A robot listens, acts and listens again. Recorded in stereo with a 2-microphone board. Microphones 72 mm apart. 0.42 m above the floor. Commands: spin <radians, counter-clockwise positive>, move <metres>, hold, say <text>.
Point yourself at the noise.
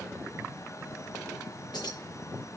spin 1.57
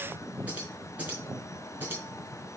spin -0.52
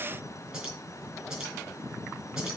spin -0.17
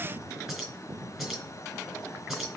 say Found it: keys jangling, straight ahead, over 4 m away.